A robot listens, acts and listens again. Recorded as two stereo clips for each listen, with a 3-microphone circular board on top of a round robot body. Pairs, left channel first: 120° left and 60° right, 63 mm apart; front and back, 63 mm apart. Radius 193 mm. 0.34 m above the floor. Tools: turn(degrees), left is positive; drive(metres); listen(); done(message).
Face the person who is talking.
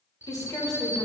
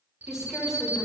turn(degrees=95)
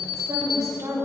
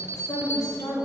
turn(degrees=-30)
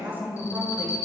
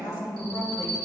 done("Found it: a woman speaking, straight ahead, 2 to 4 m away.")